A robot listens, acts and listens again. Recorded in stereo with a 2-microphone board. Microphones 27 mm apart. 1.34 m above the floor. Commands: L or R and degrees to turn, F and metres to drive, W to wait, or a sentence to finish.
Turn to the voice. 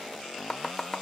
W
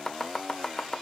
W
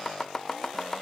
I can't make out anyone speaking, only chopping.